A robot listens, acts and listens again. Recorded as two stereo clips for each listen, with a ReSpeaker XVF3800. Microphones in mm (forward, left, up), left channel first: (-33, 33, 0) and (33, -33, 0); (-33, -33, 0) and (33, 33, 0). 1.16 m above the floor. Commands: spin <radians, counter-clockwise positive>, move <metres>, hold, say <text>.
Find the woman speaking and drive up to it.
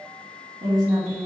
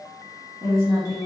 spin -0.17
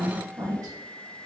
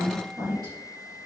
move 1.0
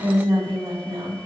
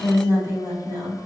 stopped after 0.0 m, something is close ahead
say Something is in my way. I am facing the woman speaking but have not reached it.